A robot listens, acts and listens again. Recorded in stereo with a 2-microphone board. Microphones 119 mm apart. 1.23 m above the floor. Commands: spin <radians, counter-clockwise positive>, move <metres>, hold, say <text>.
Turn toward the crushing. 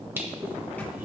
hold
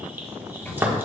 spin -0.26
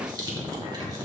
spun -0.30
spin -2.62
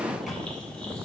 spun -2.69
hold
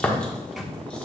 spin 0.17
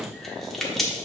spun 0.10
say Found it: crushing, straight ahead.